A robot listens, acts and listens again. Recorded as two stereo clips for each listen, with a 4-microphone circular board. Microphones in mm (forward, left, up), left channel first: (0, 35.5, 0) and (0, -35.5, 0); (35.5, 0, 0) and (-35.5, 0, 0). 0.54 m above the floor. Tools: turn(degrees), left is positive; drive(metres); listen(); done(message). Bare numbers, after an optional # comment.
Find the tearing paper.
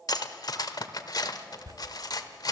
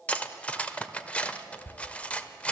# The tearing paper: 60° right.
turn(-60)
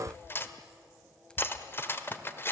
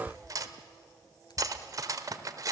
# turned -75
# The tearing paper is now 10° left.
turn(10)
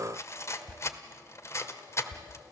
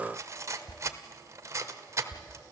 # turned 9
done("Found it: tearing paper, straight ahead.")